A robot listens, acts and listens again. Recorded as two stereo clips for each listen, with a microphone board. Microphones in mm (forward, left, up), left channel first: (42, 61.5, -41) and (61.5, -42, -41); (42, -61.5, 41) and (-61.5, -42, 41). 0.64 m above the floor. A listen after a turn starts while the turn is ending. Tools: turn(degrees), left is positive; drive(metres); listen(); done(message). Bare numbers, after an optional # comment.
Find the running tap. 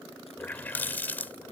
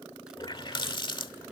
# The running tap: 30° left.
turn(30)
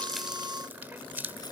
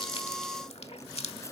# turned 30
done("Found it: a running tap, straight ahead.")